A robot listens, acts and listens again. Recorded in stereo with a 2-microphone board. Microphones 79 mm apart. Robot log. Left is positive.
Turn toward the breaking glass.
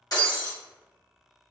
note: The breaking glass: about 50° left or 130° left.
cmd yaw +50
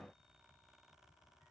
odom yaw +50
cmd idle
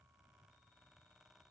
end: I heard breaking glass, but can't make it out now. It was about straight ahead or 80° left.